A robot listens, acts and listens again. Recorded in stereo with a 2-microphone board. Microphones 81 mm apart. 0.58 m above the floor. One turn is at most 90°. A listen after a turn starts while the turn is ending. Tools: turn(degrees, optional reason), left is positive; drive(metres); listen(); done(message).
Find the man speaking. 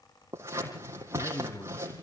turn(degrees=90)
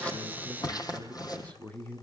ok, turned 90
turn(degrees=20, reason="So it is at 20° left.")
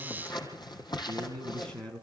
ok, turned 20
turn(degrees=15, reason="The man speaking is now 15° left.")
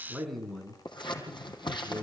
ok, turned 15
done("Found it: a man speaking, straight ahead, over 4 m away.")